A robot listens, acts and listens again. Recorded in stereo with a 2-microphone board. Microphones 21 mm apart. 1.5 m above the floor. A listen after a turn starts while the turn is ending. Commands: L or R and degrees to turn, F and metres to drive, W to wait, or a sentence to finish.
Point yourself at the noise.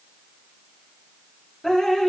L25
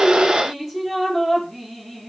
Facing the dripping, 2 to 4 m away.